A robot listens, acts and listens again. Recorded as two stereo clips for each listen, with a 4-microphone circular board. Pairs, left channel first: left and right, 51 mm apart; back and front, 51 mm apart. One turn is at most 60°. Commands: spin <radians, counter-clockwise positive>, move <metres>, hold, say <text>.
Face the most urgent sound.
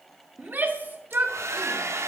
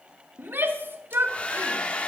spin -0.79
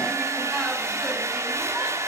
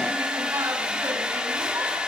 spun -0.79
hold
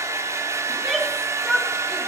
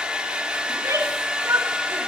say Facing the shout.